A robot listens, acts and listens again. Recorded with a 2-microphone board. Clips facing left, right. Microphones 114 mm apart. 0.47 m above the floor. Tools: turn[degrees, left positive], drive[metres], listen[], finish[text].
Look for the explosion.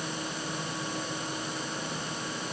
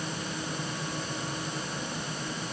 Action: listen[]
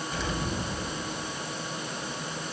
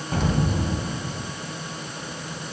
Thought: The explosion: about 50° right or 130° right.
Action: turn[-50]
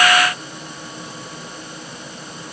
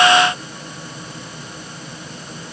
Action: listen[]
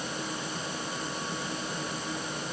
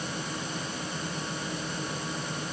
Action: finish[I heard an explosion, but can't make it out now. It was about straight ahead or 80° right.]